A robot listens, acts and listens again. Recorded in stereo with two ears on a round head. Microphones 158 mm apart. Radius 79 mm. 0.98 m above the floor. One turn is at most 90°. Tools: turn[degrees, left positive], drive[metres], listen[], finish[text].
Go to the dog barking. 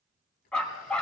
Action: turn[30]
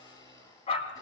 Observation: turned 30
Thought: So it is at 145° left.
Action: turn[90]
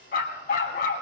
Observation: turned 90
Thought: The dog barking is now 60° left.
Action: turn[60]
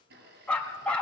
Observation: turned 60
Action: drive[1.0]
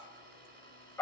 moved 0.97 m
Thought: The dog barking is now 15° left.
Action: turn[15]
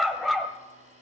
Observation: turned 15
Action: drive[1.0]
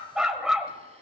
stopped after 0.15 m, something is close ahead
Action: finish[I am next to the dog barking.]